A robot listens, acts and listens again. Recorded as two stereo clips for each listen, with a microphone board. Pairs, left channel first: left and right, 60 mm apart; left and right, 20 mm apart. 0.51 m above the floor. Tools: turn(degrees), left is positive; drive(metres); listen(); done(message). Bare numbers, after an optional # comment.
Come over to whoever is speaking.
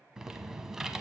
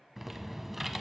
listen()
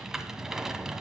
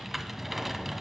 listen()
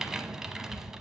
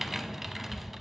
done("I can't make out anyone speaking to turn to.")